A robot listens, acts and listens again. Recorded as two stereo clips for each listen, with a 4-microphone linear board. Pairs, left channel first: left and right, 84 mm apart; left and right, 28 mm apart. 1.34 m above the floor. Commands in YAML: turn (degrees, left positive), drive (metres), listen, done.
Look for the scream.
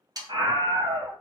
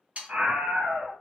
turn: -70
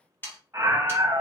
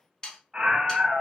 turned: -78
turn: -30
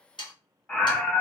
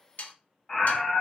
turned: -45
turn: 15
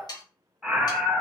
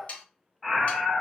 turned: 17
done: "Found it: a scream, straight ahead."